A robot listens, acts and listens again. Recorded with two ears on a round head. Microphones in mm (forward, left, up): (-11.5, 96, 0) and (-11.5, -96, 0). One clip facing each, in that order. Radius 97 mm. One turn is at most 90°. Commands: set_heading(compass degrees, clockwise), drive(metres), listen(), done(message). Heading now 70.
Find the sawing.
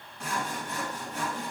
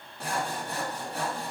set_heading(100)
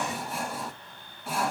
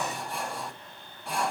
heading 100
done("Facing the sawing, 2 to 4 m away.")